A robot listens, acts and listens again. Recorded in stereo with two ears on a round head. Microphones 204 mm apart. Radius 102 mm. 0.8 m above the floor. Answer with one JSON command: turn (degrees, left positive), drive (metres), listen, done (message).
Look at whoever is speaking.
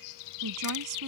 {"turn": -90}
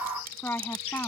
{"turn": 10}
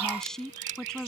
{"done": "Found it: a woman speaking, straight ahead."}